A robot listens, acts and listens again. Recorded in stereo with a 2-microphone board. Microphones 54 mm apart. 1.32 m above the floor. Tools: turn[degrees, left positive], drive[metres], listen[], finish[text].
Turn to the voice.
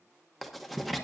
Action: listen[]
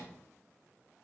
Action: listen[]
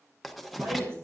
Thought: The woman speaking: about 55° right or 125° right.
Action: turn[-55]
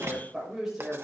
Action: finish[Facing the woman speaking.]